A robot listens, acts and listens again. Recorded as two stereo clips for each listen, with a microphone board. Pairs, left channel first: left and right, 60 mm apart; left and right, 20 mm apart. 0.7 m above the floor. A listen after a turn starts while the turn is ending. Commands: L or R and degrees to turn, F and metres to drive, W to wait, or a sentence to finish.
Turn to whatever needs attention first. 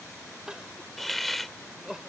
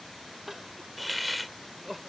R30
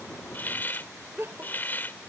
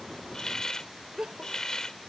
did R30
R135
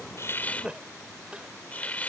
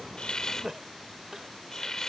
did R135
R15
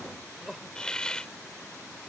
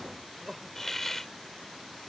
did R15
Found it: crying, straight ahead.